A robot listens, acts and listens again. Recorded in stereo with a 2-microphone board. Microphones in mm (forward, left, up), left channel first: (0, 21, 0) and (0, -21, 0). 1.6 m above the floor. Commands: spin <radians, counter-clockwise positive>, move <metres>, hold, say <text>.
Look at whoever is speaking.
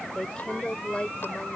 spin 0.44
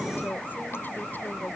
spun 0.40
hold
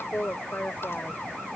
spin 2.27
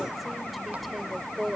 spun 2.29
say Found it: a woman speaking, straight ahead.